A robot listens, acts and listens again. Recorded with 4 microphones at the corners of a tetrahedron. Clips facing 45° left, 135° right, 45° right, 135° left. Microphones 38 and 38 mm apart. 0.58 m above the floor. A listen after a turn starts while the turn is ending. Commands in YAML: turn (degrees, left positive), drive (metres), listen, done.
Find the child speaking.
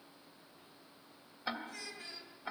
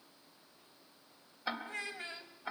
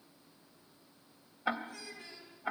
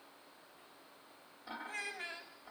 turn: 175
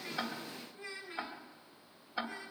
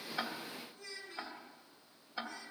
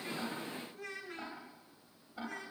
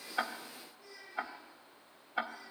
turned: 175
turn: -20
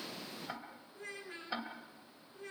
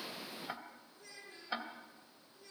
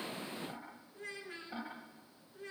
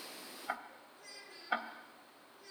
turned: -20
done: "Found it: a child speaking, straight ahead."